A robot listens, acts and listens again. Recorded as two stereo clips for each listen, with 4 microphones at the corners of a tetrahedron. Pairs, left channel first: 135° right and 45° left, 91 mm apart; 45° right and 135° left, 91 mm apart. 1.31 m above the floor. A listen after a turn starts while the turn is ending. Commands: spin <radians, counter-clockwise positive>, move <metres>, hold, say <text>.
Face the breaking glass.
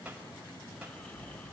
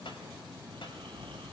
hold
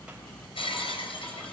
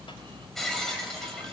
spin -2.27
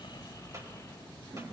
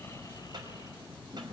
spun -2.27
say Facing where the breaking glass came from. I can't hear it now.